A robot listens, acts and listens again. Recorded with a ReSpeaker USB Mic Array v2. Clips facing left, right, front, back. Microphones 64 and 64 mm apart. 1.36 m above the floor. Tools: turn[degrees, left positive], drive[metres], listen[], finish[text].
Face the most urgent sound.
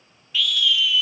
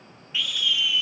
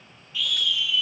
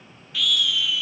Thought: The scream: 155° right.
Action: turn[-155]
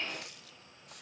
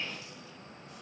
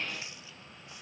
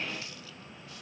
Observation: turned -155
Action: listen[]
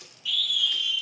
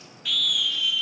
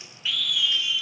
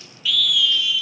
Thought: The scream is now 60° right.
Action: turn[-60]
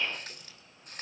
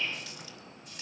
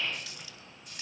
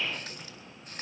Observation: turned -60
Action: listen[]
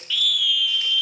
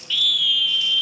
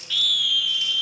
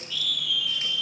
Action: finish[Found it: a scream, straight ahead.]